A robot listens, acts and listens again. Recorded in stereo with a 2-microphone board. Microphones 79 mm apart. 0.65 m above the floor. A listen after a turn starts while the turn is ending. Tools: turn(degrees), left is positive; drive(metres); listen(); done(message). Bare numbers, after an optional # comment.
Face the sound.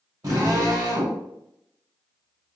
# The drill: about 50° right or 130° right.
turn(-50)
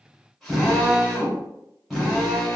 done("Found it: a drill, straight ahead.")